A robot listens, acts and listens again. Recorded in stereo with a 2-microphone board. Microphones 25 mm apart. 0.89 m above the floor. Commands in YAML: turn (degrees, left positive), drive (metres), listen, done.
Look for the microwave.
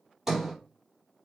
listen: true
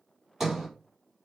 listen: true
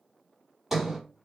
done: "I can't make out a microwave to turn to."